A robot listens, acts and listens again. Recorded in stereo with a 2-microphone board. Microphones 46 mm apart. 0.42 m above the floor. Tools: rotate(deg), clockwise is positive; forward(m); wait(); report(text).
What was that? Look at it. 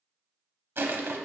rotate(60)
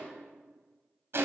rotate(60)
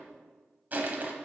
rotate(40)
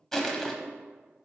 rotate(-10)
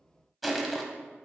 report("Found it: crushing, straight ahead.")